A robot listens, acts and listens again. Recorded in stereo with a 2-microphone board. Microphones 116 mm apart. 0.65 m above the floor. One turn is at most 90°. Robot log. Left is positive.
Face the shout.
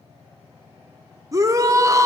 note: The shout: about 30° right or 150° right.
cmd yaw -30
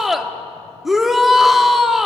end: Found it: a shout, straight ahead.